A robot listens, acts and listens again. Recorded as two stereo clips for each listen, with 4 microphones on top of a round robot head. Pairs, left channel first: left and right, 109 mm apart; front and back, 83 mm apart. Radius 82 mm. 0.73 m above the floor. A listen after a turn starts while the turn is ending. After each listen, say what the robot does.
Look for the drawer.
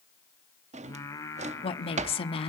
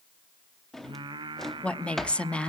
Turn 90° right.
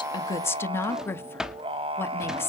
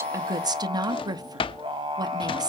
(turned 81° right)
Found it: a drawer, straight ahead, under 1 m away.